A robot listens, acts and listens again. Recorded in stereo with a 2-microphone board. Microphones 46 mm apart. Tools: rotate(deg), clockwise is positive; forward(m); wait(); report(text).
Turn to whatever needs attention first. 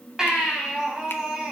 rotate(30)
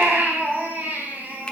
rotate(140)
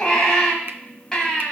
rotate(-15)
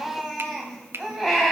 report("Found it: a baby crying, straight ahead.")